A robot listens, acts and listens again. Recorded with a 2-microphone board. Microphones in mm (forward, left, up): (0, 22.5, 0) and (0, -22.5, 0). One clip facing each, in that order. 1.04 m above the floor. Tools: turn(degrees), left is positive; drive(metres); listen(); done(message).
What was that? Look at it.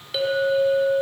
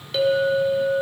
turn(degrees=30)
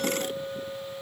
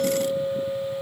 turn(degrees=-25)
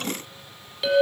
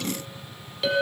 done("Found it: a clink, straight ahead, 2 to 4 m away.")